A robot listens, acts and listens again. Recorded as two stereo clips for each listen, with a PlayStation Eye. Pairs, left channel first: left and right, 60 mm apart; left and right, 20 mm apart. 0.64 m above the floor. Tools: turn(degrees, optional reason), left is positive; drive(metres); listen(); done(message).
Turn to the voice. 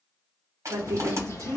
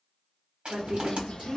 turn(degrees=-65, reason="The woman speaking: about 65° right or 115° right.")
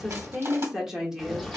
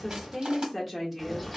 turn(degrees=-10, reason="So it is at 10° right.")
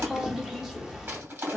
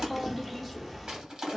done("Found it: a woman speaking, straight ahead, 1 to 2 m away.")